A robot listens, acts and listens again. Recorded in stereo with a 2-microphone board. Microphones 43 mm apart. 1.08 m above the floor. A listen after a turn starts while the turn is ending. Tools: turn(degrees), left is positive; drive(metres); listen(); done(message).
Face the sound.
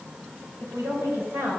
turn(degrees=-75)
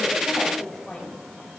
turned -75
turn(degrees=10)
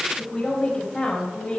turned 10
turn(degrees=15)
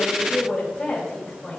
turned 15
done("Found it: a woman speaking, straight ahead.")